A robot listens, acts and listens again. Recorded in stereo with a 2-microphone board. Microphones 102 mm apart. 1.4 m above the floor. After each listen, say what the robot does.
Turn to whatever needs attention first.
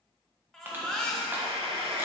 Turn 30° left.
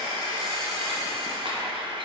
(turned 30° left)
Keep listening.
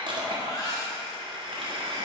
Turn 140° left.
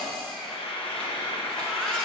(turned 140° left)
Facing the baby crying.